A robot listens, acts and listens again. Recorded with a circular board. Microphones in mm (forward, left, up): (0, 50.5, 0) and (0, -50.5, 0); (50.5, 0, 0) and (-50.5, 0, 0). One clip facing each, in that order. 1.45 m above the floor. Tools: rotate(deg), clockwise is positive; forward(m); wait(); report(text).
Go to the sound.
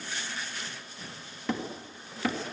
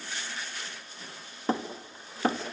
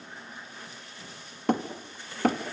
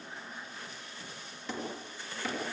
rotate(35)
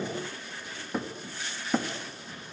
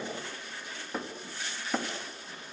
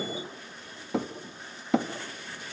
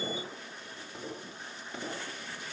forward(1.0)
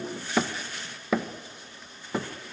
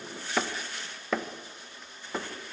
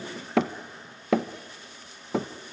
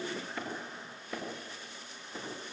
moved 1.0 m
forward(1.0)
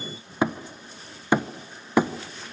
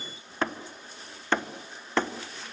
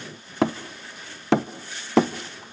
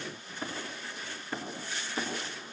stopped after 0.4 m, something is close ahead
rotate(-10)
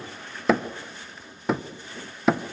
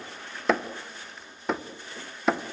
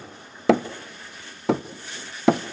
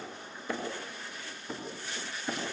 report("Arrived at the hammering, straight ahead.")